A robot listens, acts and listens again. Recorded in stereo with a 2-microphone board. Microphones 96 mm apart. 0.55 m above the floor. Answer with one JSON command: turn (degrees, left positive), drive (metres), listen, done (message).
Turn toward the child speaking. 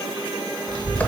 {"turn": -40}
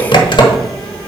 {"turn": 10}
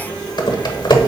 {"turn": 15}
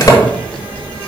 {"turn": 15}
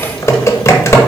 {"done": "Facing the child speaking, 2 to 4 m away."}